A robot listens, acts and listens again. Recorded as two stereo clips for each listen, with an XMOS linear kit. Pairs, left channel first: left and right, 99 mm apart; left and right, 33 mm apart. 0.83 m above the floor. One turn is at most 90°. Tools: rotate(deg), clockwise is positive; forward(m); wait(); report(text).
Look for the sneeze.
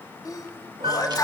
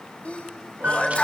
rotate(-40)
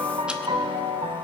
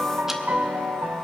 wait()
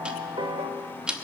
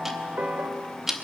report("I heard a sneeze, but can't make it out now. It was about straight ahead or 100° left.")